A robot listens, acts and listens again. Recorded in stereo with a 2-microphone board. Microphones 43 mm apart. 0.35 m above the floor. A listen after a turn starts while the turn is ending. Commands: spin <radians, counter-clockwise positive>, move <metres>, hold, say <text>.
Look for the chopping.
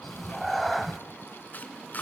spin 0.79
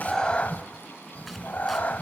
hold
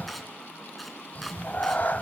say Found it: chopping, straight ahead, 2 to 4 m away.